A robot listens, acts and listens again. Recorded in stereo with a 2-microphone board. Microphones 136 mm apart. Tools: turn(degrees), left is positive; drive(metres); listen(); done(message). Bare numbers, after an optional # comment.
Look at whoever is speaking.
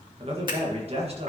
# The man speaking: about 45° right or 135° right.
turn(-45)
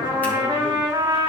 listen()
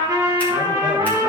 listen()
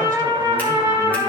done("I heard a man speaking, but can't make it out now. It was about straight ahead or 90° right.")